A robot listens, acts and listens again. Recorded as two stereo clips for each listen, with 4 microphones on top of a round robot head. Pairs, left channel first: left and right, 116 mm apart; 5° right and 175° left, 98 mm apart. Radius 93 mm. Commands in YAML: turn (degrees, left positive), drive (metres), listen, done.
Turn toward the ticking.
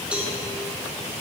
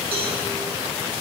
listen: true
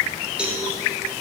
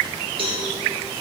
listen: true
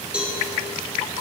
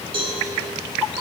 done: "I can't make out ticking, only a cowbell."